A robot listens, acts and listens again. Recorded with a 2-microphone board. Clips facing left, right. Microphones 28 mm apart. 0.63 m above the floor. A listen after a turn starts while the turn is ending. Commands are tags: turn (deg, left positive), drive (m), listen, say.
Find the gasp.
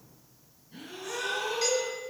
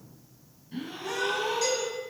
<turn deg="-40"/>
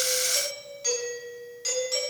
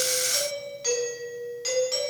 <listen/>
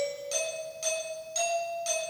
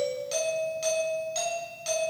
<say>I heard a gasp, but can't make it out now. It was about straight ahead or 100° right.</say>